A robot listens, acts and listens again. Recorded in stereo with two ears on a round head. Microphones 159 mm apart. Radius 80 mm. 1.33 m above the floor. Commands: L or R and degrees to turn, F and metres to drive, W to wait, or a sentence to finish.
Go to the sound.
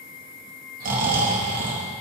R50
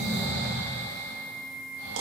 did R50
R80
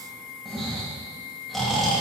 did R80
F1.0
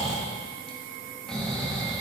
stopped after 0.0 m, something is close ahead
Something is in my way. I am facing the snoring but have not reached it.